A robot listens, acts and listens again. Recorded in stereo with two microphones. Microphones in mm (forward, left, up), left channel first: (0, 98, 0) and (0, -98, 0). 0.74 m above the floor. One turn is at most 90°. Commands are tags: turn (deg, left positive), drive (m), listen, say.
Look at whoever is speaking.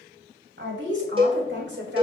<turn deg="-65"/>
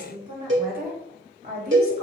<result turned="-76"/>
<turn deg="-55"/>
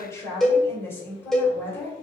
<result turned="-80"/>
<turn deg="10"/>
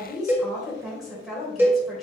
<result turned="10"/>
<say>Found it: a woman speaking, straight ahead, 2 to 4 m away.</say>